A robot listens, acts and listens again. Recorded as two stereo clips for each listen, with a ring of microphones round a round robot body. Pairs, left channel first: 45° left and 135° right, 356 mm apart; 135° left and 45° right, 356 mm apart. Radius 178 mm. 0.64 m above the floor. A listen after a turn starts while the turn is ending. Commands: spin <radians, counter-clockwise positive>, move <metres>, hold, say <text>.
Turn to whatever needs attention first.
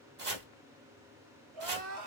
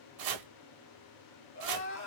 spin -2.97
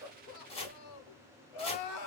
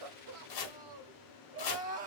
spin 0.44
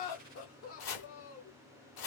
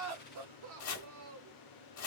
say Facing the crying.